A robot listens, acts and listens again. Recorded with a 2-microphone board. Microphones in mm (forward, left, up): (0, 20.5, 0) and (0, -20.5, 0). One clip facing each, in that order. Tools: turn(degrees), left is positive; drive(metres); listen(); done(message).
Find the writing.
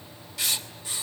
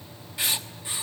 turn(degrees=-25)
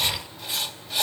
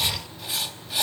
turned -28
done("Facing the writing, 1 to 2 m away.")